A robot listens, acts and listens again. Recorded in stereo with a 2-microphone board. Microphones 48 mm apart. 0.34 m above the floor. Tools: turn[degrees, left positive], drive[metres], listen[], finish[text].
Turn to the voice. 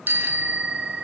Action: listen[]
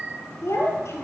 Action: turn[90]
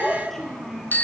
Action: finish[Facing the child speaking, over 4 m away.]